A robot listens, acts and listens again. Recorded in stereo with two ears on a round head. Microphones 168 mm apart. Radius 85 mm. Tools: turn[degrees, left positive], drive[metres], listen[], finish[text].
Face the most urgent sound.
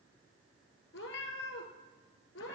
Action: listen[]
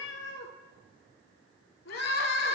Thought: The crying: about 55° left or 125° left.
Action: turn[55]
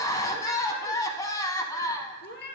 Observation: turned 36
Thought: So it is at 20° left.
Action: turn[20]
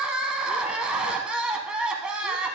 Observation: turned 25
Action: finish[Found it: crying, straight ahead.]